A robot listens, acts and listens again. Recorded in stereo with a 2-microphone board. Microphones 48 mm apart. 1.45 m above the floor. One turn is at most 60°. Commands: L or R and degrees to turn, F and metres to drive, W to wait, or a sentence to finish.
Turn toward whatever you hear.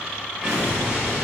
R25
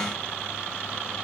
W
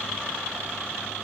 I heard an explosion, but can't make it out now. It was about straight ahead or 130° right.